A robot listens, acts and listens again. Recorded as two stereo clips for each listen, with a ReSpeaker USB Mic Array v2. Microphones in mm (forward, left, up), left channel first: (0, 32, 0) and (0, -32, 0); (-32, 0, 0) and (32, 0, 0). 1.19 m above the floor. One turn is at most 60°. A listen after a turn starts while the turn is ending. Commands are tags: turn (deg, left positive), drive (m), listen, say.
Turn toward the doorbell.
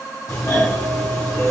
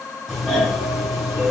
<turn deg="60"/>
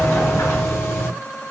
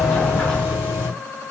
<turn deg="40"/>
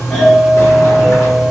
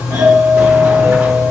<say>Facing the doorbell, 1 to 2 m away.</say>